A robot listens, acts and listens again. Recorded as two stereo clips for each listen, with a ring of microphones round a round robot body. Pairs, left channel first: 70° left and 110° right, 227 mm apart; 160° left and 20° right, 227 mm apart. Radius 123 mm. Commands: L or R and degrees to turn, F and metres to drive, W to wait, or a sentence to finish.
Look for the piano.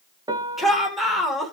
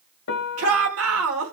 L180
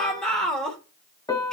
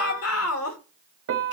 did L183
Found it: a piano, straight ahead.